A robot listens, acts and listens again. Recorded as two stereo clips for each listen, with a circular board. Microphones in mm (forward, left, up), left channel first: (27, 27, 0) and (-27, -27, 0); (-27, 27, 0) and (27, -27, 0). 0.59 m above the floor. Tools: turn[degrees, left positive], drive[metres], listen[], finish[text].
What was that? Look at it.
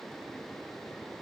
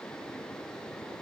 Action: listen[]
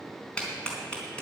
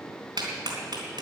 Thought: The clap: 30° right.
Action: turn[-30]
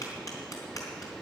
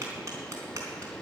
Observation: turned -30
Action: finish[Facing the clap.]